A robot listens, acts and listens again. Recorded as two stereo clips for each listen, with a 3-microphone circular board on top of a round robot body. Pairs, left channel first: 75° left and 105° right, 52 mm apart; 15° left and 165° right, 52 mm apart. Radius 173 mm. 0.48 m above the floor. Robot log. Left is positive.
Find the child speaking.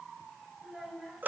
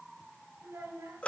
note: The child speaking: 170° left.
cmd yaw +170
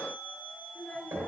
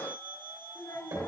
note: The child speaking is now 10° left.
cmd yaw +10
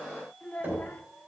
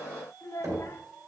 note: The child speaking is now 15° left.
cmd yaw +15
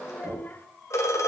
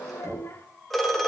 note: The child speaking is now 30° left.
cmd yaw +30
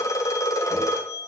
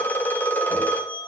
cmd idle
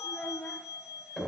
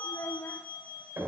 note: The child speaking is now 10° left.
cmd yaw +10
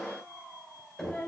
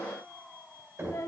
end: Facing the child speaking.